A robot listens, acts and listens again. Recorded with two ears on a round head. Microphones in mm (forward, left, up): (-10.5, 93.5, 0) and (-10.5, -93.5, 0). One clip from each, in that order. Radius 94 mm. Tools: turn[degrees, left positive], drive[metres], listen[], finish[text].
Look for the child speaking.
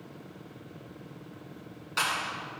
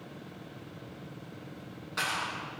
Action: listen[]
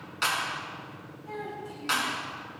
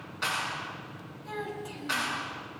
Thought: The child speaking: about 50° right or 130° right.
Action: turn[-50]
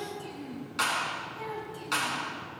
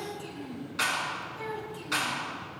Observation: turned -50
Action: finish[Found it: a child speaking, straight ahead, over 4 m away.]